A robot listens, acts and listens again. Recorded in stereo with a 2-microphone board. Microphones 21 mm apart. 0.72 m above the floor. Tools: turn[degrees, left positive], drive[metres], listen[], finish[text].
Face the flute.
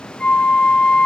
Thought: The flute: about 40° left or 140° left.
Action: turn[40]
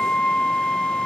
Thought: So it is at 10° left.
Action: turn[10]
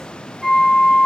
Action: finish[Facing the flute.]